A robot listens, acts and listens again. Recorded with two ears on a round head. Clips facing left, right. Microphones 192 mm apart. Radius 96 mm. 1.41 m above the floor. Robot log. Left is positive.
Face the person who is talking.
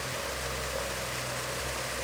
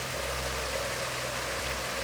cmd idle
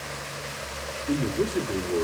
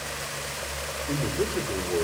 note: The man speaking: about 50° left or 130° left.
cmd yaw +50
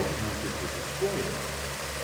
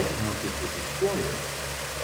end: Found it: a man speaking, straight ahead, 2 to 4 m away.